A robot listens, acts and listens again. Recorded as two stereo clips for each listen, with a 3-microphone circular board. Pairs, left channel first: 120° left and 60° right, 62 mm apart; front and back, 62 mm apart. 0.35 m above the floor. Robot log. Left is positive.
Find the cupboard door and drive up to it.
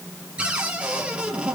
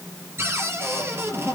note: The cupboard door: 135° right.
cmd yaw -135
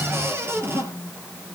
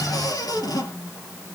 note: The cupboard door is now 10° right.
cmd yaw -10
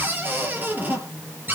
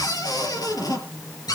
cmd fwd 1.0
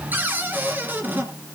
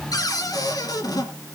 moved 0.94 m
cmd fwd 1.0
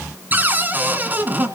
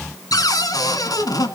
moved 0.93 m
cmd fwd 1.0
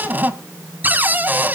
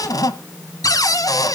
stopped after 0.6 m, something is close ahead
end: I am next to the cupboard door.